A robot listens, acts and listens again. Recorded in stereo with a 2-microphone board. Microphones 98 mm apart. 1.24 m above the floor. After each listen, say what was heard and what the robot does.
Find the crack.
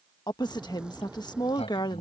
Turn 30° right.
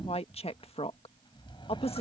Keep listening.
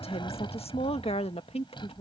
I heard a crack, but can't make it out now. It was about 20° left or 140° right.